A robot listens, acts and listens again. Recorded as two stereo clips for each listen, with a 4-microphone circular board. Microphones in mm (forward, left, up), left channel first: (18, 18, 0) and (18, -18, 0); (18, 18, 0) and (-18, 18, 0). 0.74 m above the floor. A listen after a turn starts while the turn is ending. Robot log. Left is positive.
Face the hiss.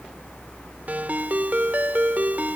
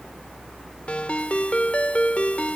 cmd idle
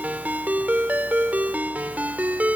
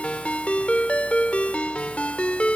cmd idle
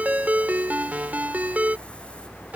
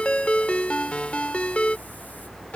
end: I can't make out a hiss, only a ringtone.